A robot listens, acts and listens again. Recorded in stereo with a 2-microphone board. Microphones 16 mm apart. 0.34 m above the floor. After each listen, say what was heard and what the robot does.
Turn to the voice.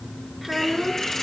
Turn 30° left.
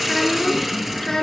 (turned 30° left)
So it is at 135° left. Turn 135° left.
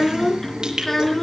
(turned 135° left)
Facing the child speaking, 2 to 4 m away.